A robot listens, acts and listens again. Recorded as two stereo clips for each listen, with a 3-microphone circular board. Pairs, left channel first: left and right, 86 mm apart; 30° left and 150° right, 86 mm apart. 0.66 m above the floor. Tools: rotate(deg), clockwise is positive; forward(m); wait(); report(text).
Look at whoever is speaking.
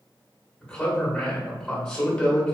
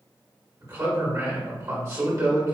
rotate(-165)
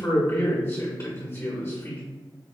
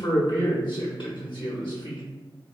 rotate(-35)
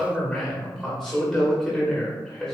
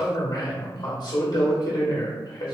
report("Facing the man speaking.")